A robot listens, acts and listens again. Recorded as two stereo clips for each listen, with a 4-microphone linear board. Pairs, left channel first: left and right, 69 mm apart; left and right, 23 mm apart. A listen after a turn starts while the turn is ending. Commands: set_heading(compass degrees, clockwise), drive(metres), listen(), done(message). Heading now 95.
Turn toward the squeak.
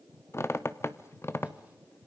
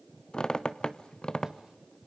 set_heading(55)
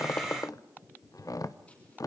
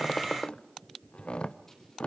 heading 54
set_heading(329)
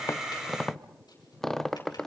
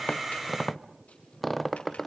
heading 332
done("Found it: a squeak, straight ahead.")